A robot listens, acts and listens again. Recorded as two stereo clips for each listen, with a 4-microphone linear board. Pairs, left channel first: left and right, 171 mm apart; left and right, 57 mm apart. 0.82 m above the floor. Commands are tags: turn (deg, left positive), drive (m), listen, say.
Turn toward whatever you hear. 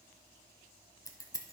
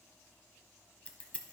<turn deg="20"/>
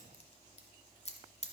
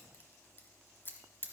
<turn deg="135"/>
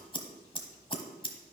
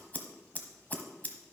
<turn deg="35"/>
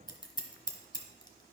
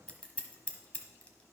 <turn deg="30"/>
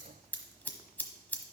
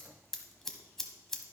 <turn deg="10"/>
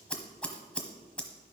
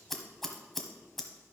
<say>Facing the scissors, 1 to 2 m away.</say>